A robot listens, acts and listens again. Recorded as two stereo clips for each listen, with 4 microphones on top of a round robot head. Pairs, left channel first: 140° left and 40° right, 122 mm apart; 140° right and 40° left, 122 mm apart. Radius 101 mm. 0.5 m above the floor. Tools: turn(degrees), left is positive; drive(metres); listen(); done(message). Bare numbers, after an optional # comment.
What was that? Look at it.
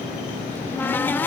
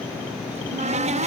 # The cupboard door: 65° left.
turn(65)
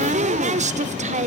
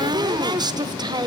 # The cupboard door is now 20° right.
turn(-20)
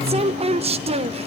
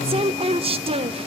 done("Facing the cupboard door.")